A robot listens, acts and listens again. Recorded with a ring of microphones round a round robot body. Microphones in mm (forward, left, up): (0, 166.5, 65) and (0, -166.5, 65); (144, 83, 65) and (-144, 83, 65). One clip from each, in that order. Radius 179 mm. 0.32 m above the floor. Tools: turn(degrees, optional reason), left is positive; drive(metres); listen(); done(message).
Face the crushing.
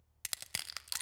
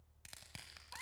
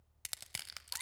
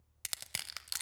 turn(degrees=95, reason="The crushing: 95° left.")
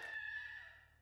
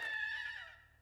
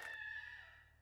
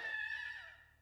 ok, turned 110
turn(degrees=-15, reason="Nothing new. It was at 15° right.")
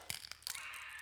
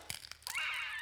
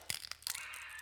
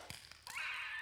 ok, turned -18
done("Found it: crushing, straight ahead.")